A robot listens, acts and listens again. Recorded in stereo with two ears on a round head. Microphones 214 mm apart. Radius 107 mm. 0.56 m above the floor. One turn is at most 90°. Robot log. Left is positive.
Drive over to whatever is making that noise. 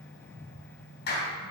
note: The clap: about 45° left or 135° left.
cmd yaw +45
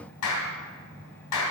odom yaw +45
note: So it is at 90° left.
cmd yaw +90
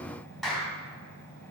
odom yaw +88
cmd fwd 1.0
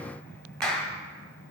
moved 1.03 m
cmd fwd 1.0
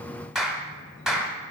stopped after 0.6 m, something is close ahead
end: Arrived at the clap, straight ahead.